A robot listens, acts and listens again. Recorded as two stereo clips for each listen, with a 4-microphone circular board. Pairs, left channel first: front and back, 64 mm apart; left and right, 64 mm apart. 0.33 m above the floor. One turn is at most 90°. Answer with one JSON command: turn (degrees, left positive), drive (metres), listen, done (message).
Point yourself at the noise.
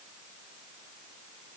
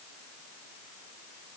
{"listen": true}
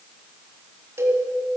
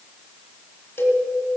{"turn": 90}
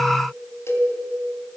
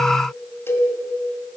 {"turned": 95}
{"turn": 40}
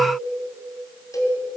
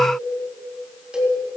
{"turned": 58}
{"turn": -15}
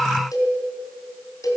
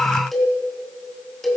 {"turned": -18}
{"done": "Facing the cowbell."}